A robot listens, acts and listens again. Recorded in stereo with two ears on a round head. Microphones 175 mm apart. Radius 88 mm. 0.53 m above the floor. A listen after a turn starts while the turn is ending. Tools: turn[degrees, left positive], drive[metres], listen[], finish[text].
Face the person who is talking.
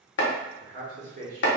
Thought: The man speaking: about 40° right or 140° right.
Action: turn[-40]
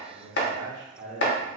Thought: The man speaking: about 30° right or 150° right.
Action: turn[-30]
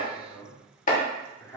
Thought: So it is at 20° left.
Action: turn[20]
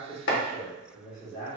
Thought: The man speaking is now 25° left.
Action: turn[25]
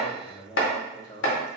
Thought: The man speaking is now 25° left.
Action: turn[25]
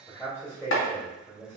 Thought: The man speaking is now 10° left.
Action: turn[10]
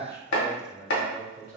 Action: finish[Facing the man speaking, 1 to 2 m away.]